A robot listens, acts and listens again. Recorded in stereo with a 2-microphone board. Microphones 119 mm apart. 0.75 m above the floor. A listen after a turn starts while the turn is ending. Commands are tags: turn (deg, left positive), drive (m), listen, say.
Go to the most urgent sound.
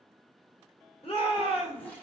<turn deg="50"/>
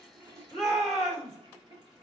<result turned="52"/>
<drive m="1.0"/>
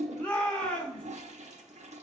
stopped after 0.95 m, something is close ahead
<turn deg="15"/>
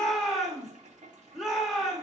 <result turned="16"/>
<say>Arrived at the shout, straight ahead.</say>